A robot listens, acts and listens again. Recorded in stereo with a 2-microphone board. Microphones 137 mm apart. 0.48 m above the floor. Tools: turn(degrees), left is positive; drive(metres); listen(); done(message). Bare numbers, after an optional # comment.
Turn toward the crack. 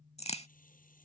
# The crack: about 50° left or 130° left.
turn(50)
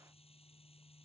listen()
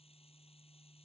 done("I heard a crack, but can't make it out now. It was about straight ahead or 80° left.")